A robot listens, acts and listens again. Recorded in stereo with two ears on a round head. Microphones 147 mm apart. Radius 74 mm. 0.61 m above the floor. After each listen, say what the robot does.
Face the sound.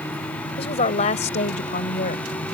Turn 50° left.
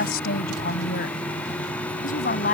Turn 50° left.
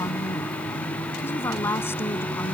Turn 15° left.
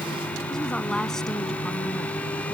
Keep listening.
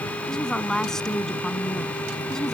Found it: a woman speaking, straight ahead.